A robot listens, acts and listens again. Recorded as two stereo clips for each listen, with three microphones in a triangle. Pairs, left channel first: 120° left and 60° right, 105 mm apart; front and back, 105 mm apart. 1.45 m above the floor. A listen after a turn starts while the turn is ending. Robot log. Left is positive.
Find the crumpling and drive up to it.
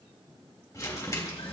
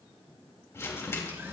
note: The crumpling: 65° left.
cmd yaw +65
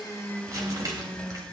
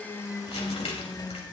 note: The crumpling is now 10° right.
cmd yaw -10
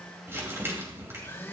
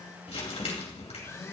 cmd fwd 1.0
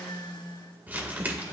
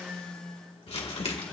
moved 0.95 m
note: The crumpling is now 15° left.
cmd yaw +15
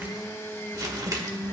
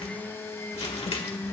cmd fwd 1.0
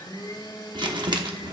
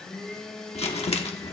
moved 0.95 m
note: The crumpling is now 15° right.
cmd yaw -15
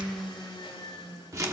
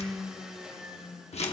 cmd fwd 1.0
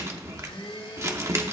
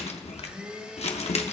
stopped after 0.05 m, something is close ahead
end: Arrived at the crumpling, straight ahead.